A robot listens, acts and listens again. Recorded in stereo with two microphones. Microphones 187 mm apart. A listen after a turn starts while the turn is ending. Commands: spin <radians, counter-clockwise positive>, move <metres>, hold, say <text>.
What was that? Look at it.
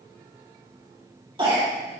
spin -0.44
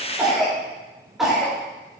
say Facing the cough.